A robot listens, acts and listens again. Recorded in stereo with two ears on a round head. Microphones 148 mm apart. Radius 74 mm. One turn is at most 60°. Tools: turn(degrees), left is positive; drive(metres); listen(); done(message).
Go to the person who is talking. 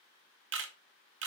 listen()
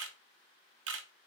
listen()
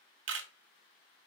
done("I can't make out anyone speaking to turn to.")